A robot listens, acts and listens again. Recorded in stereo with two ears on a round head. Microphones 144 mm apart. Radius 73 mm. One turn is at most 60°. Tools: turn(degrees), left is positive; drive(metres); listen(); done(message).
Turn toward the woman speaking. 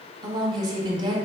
turn(degrees=-30)
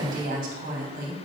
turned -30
turn(degrees=-60)
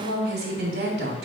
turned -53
turn(degrees=-60)
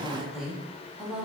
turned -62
done("Facing the woman speaking.")